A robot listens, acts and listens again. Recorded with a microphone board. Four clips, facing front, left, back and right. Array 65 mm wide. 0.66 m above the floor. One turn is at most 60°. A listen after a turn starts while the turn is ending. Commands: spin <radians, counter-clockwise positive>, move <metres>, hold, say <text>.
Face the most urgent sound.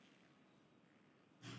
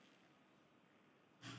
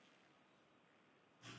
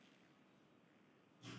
hold
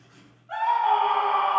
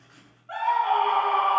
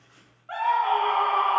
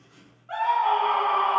spin 1.05
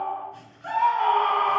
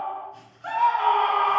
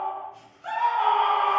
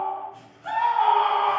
spin 1.05
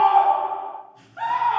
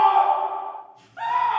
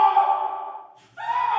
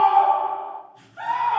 spin 0.61
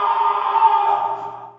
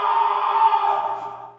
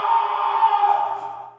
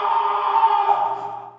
say Facing the scream.